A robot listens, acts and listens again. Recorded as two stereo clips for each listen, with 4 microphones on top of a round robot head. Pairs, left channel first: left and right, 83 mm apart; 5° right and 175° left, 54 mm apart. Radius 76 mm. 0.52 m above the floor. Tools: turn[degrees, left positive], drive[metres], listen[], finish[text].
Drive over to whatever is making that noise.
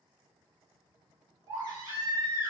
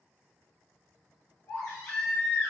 Thought: The baby crying: 50° right.
Action: turn[-50]
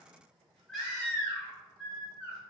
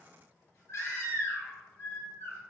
Action: drive[1.0]
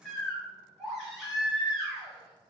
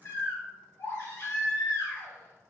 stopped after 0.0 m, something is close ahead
Action: finish[Blocked. The baby crying is further on, straight ahead.]